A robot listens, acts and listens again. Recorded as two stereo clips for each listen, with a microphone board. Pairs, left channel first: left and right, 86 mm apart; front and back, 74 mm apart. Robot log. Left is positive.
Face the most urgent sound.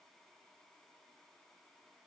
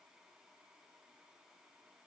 cmd idle
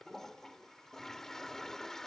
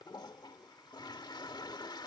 cmd idle
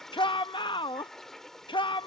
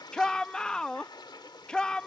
note: The shout: 80° left.
cmd yaw +80
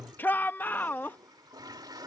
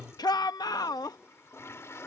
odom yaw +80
note: The shout is now 25° left.
cmd yaw +25
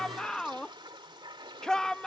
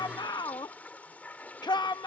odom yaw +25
note: The shout is now 10° left.
cmd yaw +10
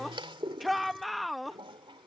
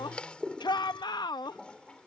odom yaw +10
end: Found it: a shout, straight ahead.